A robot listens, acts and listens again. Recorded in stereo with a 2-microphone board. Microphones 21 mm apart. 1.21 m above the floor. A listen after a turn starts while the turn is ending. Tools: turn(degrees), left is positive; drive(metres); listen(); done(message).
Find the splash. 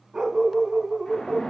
turn(degrees=60)
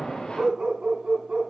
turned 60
listen()
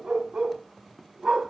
done("I heard a splash, but can't make it out now. It was about straight ahead or 60° left.")